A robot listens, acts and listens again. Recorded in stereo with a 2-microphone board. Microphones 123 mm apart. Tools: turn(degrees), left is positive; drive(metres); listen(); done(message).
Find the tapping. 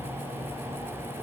listen()
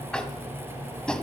turn(degrees=30)
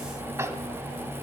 turn(degrees=-20)
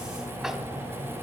listen()
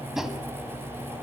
done("Facing the tapping.")